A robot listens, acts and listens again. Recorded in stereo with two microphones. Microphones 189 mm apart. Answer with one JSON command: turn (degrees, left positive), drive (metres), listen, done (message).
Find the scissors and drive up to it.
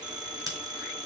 {"turn": -15}
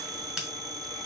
{"drive": 1.0}
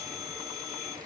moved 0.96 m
{"listen": true}
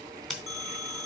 {"drive": 1.0}
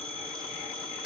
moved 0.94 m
{"drive": 1.0}
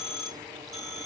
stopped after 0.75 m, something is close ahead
{"listen": true}
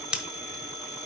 {"done": "Arrived at the scissors, straight ahead."}